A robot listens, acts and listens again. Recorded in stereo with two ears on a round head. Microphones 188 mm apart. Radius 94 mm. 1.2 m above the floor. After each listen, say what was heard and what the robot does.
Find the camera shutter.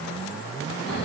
Keep listening.
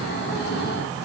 Keep listening.
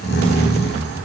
I can't make out a camera shutter, only snoring.